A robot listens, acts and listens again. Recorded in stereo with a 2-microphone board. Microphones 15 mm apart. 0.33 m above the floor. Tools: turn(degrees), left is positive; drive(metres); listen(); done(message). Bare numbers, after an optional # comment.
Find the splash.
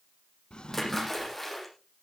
turn(30)
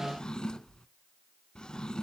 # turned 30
listen()
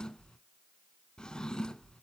done("I heard a splash, but can't make it out now. It was about 20° right or 140° left.")